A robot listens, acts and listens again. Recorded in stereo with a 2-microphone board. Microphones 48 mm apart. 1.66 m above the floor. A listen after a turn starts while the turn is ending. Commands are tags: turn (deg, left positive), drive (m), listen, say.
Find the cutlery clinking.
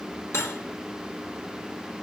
<turn deg="70"/>
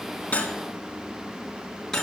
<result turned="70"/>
<turn deg="10"/>
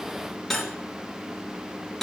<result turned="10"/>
<say>Found it: cutlery clinking, straight ahead, 2 to 4 m away.</say>